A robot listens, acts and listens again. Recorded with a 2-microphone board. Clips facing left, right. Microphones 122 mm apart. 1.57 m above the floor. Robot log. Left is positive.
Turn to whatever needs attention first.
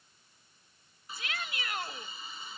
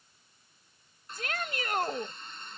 note: The shout: about 45° right or 135° right.
cmd yaw -45
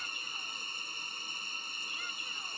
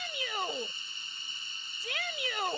note: So it is at 90° right.
cmd yaw -90
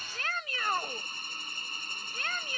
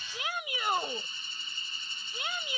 note: The shout is now 15° right.
cmd yaw -15
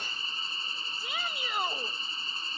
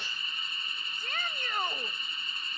note: The shout is now 10° left.
cmd yaw +10
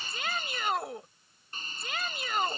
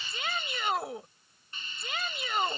end: Facing the shout.